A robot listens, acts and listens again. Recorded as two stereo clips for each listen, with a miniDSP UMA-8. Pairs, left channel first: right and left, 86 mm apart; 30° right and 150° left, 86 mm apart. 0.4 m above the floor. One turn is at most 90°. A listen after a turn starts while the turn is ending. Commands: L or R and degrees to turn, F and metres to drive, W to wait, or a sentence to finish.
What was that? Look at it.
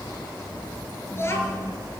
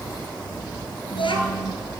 R30
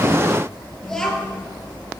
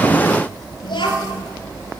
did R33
R10
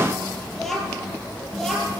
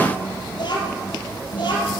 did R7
Facing the child speaking, over 4 m away.